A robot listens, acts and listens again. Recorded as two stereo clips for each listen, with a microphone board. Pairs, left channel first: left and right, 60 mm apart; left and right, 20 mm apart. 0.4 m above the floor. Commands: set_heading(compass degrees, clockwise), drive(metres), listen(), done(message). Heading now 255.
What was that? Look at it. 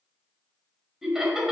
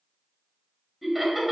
set_heading(285)
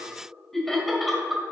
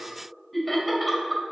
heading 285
set_heading(315)
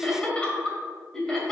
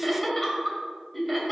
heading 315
done("Found it: laughter, straight ahead.")